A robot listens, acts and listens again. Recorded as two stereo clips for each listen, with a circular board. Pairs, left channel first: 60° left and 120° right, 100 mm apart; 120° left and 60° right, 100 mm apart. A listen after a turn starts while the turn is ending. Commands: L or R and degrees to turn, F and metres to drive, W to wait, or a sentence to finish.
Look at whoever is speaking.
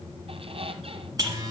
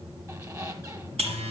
W
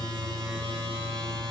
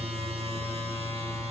W
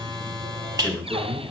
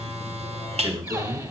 R10
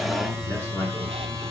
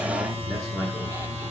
W
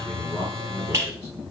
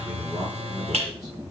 Facing the man speaking, over 4 m away.